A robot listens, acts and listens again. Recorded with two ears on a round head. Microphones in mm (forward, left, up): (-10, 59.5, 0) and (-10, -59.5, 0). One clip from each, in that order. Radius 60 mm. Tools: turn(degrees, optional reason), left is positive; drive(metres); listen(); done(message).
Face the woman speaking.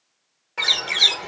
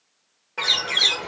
listen()
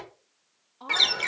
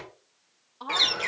turn(degrees=-30, reason="The woman speaking: about 30° right or 150° right.")
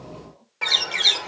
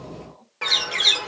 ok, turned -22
turn(degrees=-35, reason="The woman speaking: about 35° right or 145° right.")
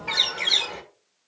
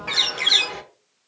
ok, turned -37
listen()
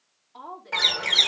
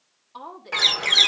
turn(degrees=-135, reason="So it is at 135° right.")
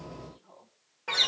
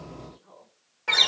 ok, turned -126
turn(degrees=-10, reason="The woman speaking is now 10° right.")
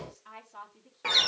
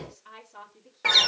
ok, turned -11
done("Found it: a woman speaking, straight ahead.")